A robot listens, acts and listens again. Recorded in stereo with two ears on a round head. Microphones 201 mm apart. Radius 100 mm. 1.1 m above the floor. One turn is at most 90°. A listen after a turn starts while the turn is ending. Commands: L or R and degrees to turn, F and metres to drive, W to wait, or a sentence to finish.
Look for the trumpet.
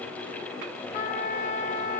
L40
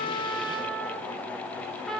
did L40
Facing the trumpet, 2 to 4 m away.